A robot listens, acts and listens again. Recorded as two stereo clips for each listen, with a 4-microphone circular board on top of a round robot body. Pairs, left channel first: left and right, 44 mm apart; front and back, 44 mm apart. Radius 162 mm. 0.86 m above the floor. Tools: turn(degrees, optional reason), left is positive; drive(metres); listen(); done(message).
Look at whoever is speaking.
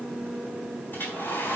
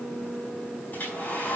listen()
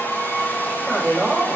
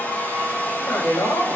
turn(degrees=-10, reason="The man speaking: 10° right.")
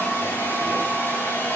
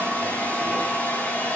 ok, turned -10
listen()
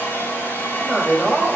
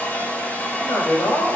done("Found it: a man speaking, straight ahead.")